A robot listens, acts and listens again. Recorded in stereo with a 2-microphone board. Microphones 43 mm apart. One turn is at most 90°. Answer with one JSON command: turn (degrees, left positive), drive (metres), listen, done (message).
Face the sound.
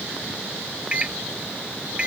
{"turn": -20}
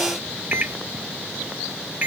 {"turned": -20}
{"turn": -90}
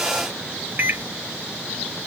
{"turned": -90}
{"turn": -60}
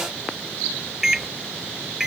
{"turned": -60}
{"turn": -15}
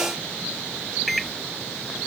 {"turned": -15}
{"done": "Found it: a microwave, straight ahead."}